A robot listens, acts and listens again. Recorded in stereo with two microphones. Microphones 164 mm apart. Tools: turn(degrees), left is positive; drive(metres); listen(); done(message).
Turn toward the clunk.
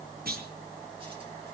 turn(degrees=-70)
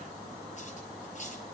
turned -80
listen()
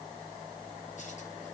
done("I heard a clunk, but can't make it out now. It was about 10° left or 30° right.")